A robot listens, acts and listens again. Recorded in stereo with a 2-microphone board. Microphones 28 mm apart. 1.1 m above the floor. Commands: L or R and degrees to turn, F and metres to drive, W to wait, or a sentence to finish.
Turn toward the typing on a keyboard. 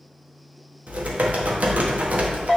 R60
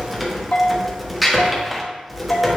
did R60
Found it: typing on a keyboard, straight ahead.